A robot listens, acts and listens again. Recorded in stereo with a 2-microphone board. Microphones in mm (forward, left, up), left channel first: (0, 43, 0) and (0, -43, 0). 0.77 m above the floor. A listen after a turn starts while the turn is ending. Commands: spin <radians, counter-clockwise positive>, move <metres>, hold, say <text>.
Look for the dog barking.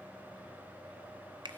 hold
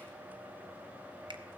hold
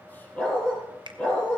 spin 0.26
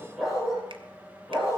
spin 0.52
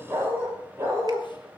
spin -0.44
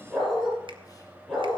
say Facing the dog barking.